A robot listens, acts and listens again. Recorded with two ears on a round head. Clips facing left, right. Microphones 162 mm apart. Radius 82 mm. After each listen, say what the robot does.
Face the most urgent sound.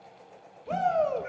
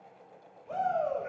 Turn 75° left.
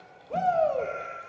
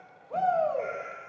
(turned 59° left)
Turn 30° left.
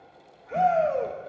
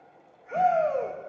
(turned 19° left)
Turn 10° left.
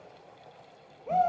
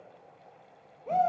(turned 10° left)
Found it: a shout, straight ahead, 1 to 2 m away.